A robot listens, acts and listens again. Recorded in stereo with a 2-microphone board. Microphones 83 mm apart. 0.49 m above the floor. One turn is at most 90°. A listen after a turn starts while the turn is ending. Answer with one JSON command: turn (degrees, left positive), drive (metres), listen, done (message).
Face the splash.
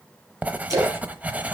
{"turn": -40}
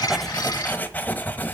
{"listen": true}
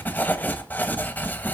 {"done": "I heard a splash, but can't make it out now. It was about straight ahead or 100° right."}